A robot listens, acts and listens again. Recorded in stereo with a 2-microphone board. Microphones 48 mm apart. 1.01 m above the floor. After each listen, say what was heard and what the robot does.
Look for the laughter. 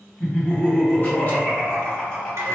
The laughter: about 15° left or 165° left. Turn 15° left.
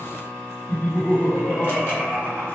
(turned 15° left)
So it is at 150° left. Turn 150° left.
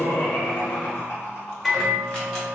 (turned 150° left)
The laughter is now 50° left. Turn 50° left.
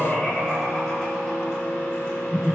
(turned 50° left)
Facing the laughter, 1 to 2 m away.